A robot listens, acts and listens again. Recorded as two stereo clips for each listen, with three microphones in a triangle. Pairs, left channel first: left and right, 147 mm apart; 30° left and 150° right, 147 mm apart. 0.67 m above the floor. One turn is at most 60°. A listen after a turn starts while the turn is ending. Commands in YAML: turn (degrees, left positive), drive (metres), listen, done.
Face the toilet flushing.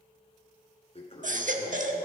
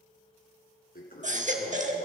turn: 40
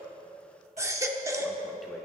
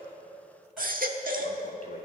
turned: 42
listen: true
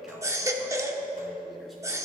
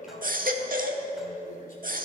done: "Facing the toilet flushing."